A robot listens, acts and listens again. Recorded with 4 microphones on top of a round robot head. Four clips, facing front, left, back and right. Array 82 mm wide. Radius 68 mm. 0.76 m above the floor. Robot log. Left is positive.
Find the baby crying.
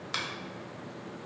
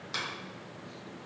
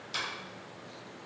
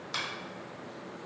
cmd idle
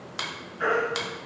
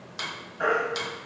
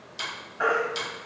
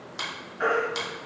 note: The baby crying: 170° left.
cmd yaw +170
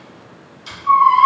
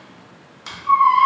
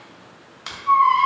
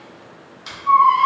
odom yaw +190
note: The baby crying is now 20° right.
cmd yaw -20
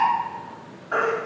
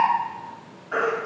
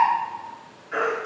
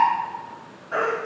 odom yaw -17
end: Found it: a baby crying, straight ahead.